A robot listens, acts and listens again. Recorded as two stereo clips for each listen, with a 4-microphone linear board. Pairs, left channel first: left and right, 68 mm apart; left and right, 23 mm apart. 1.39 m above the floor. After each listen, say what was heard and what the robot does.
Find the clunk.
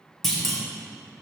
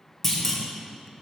Turn 30° left.
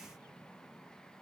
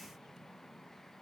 Keep listening.
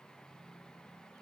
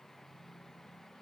I heard a clunk, but can't make it out now. It was about 25° right or 145° left.